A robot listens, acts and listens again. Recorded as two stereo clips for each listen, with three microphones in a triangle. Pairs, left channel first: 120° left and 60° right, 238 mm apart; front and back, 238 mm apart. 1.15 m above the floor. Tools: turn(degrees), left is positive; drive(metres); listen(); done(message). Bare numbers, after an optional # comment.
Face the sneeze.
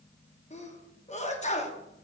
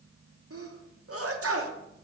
# The sneeze: straight behind.
turn(180)
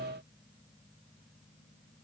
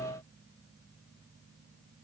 done("Facing where the sneeze came from. I can't hear it now.")